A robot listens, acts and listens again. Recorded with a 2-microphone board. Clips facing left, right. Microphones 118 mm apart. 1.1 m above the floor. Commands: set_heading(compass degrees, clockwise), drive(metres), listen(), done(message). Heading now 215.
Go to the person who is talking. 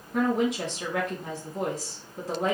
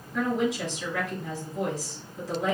set_heading(155)
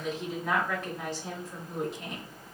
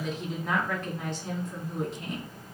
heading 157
drive(1.0)
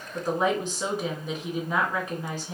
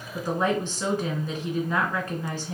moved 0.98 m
set_heading(142)
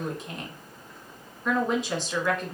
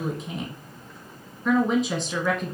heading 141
drive(1.0)
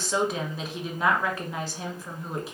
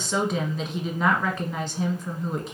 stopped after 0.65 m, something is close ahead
done("Arrived at the woman speaking, straight ahead.")